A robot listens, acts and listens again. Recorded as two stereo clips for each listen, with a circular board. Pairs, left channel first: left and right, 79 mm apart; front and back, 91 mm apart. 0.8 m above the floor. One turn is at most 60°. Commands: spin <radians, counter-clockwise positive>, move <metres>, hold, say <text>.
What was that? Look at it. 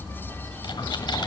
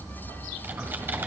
spin 1.05
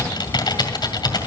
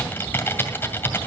spin 1.05
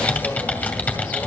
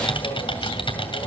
spin 0.35
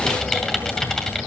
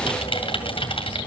say Found it: typing on a keyboard, straight ahead.